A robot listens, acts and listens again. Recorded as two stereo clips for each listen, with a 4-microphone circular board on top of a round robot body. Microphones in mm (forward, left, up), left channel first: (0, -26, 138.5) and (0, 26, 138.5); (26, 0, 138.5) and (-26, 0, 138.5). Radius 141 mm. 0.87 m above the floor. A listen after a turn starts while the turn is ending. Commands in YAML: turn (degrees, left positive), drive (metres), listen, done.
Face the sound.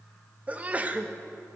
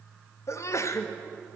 turn: 30
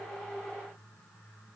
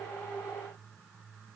done: "Facing where the sneeze came from. I can't hear it now."